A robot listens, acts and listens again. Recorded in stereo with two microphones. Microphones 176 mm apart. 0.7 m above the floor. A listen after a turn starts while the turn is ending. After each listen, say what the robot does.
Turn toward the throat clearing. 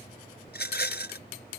Keep listening.
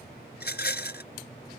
Keep listening.
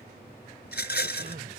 Turn 70° right.
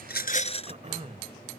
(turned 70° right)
Turn 40° right.
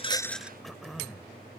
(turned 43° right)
Found it: throat clearing, straight ahead.